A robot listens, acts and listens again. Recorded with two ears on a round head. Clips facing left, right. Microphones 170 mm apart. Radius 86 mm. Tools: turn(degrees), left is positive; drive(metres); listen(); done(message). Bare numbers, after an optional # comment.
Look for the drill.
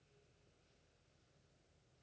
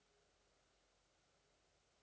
listen()
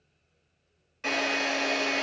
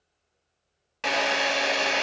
# The drill: about 75° right or 105° right.
turn(-75)
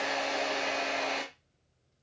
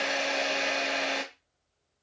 # So it is at 30° right.
turn(-30)
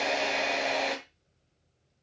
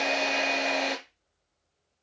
done("Facing the drill.")